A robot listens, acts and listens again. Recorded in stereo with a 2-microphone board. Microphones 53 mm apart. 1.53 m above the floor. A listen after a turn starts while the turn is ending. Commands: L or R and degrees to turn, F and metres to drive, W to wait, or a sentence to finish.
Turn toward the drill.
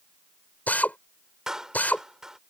L30
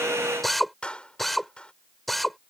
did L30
Found it: a drill, straight ahead.